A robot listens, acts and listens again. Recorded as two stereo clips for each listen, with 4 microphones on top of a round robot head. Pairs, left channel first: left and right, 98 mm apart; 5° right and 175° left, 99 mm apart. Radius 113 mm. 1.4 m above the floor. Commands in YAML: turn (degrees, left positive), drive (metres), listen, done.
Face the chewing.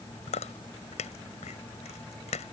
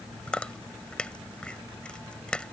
turn: 80
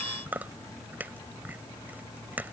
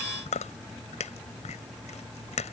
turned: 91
turn: -10
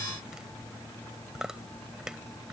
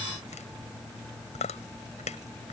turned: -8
done: "Facing the chewing."